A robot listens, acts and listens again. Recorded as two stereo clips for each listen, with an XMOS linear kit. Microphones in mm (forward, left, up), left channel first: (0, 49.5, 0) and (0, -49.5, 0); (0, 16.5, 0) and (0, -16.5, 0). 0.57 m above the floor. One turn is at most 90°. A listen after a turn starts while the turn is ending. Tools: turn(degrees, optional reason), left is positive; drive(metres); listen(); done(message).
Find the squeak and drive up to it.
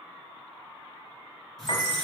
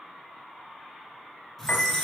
turn(degrees=30)
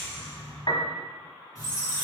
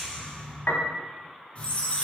turn(degrees=90, reason="So it is at 145° left.")
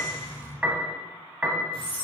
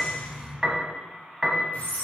turn(degrees=65, reason="The squeak is now 65° left.")
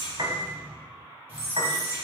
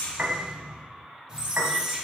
turn(degrees=-20, reason="The squeak is now 20° right.")
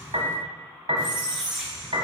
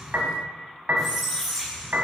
drive(metres=1.0)
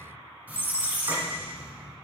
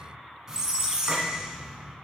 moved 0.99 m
turn(degrees=-20, reason="The squeak is now 20° right.")
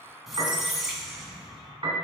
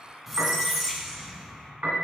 drive(metres=1.0)
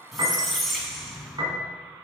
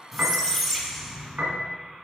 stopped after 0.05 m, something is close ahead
done("Arrived at the squeak, straight ahead.")